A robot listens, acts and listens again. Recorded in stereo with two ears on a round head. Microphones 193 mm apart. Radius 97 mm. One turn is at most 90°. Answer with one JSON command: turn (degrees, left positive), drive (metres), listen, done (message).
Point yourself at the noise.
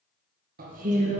{"turn": -30}
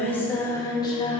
{"turn": 20}
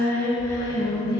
{"turn": 20}
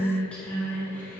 {"turn": 10}
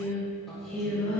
{"done": "Found it: singing, straight ahead, 2 to 4 m away."}